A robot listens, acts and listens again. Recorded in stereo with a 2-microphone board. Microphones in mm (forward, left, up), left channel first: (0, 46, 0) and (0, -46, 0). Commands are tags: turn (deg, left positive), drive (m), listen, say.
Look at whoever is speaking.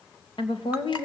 <turn deg="75"/>
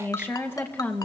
<turn deg="20"/>
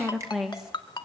<say>Facing the woman speaking, 2 to 4 m away.</say>